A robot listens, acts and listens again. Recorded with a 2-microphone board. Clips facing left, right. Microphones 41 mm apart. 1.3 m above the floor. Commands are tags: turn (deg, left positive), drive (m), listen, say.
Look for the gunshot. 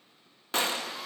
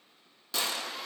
<turn deg="45"/>
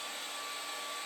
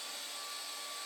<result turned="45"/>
<listen/>
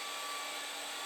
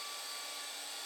<say>I heard a gunshot, but can't make it out now. It was about straight ahead or 90° left.</say>